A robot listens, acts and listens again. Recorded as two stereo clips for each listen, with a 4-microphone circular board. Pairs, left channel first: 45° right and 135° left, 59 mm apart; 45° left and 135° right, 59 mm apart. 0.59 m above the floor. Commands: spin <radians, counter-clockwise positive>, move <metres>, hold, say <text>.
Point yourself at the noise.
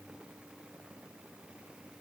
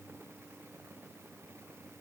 hold
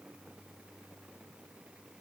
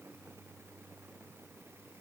hold
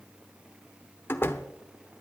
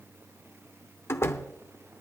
say Found it: a door slam, straight ahead, under 1 m away.